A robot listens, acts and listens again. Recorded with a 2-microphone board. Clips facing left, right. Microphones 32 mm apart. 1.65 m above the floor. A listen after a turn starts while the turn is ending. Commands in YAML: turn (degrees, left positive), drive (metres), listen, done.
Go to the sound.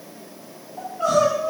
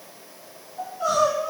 turn: 60
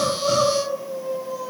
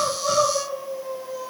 drive: 1.0
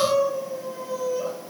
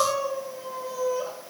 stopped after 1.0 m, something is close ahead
done: "I am next to the crying."